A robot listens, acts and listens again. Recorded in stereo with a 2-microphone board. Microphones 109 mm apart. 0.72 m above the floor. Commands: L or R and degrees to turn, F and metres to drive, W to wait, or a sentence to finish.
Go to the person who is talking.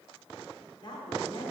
L45
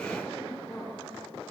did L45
F1.0
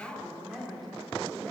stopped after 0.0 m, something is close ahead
Something is in my way. I am facing the woman speaking but have not reached it.